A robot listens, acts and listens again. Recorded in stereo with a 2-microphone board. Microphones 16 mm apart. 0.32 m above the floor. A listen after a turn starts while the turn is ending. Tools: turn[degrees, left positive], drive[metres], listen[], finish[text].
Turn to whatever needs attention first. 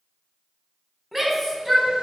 Action: turn[30]
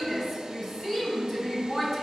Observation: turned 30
Thought: So it is at 150° left.
Action: turn[150]
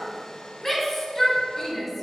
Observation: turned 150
Thought: The shout is now 15° left.
Action: turn[15]
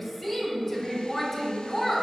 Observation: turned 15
Action: finish[Facing the shout.]